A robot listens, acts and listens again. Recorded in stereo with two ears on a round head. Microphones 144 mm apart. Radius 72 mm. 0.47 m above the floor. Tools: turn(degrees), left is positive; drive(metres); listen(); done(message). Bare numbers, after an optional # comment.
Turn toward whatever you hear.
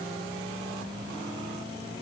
listen()
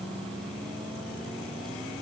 listen()
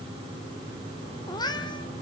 # The cat meowing: about 25° left or 155° left.
turn(25)
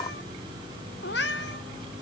# So it is at 105° left.
turn(105)
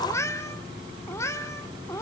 # The cat meowing is now 15° left.
turn(15)
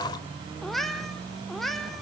done("Found it: a cat meowing, straight ahead.")